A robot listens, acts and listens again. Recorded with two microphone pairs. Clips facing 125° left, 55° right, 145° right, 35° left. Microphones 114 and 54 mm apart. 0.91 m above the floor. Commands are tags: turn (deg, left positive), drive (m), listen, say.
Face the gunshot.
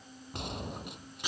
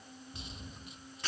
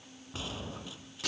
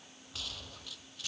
<turn deg="150"/>
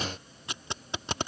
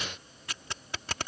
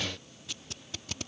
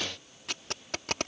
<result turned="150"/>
<say>I heard a gunshot from this way, but can't make it out now.</say>